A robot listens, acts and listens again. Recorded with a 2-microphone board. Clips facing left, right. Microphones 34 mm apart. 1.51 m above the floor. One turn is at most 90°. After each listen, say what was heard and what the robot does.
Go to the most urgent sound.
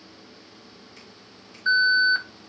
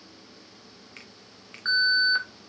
The alarm: about 45° right or 135° right. Turn 45° right.
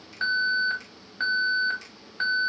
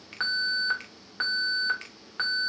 So it is at 90° right. Turn 90° right.
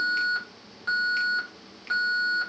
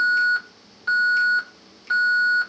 Drive 1.0 m forward.
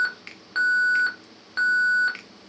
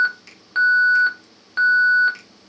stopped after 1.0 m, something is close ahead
I am next to the alarm.